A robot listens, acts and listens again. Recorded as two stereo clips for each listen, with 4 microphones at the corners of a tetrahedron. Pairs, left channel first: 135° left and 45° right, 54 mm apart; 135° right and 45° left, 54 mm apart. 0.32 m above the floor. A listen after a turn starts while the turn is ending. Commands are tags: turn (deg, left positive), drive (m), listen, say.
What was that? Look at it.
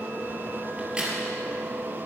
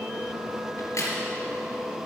<turn deg="-120"/>
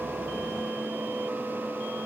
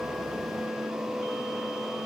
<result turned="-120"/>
<say>Facing where the crack came from. I can't hear it now.</say>